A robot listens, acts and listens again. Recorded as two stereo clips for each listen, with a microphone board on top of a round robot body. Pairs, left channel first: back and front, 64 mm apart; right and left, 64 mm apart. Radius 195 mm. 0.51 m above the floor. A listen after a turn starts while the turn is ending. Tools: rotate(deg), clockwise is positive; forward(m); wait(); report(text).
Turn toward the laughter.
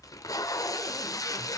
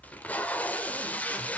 wait()
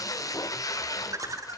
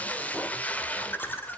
rotate(35)
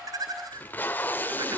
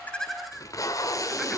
report("Facing the laughter, over 4 m away.")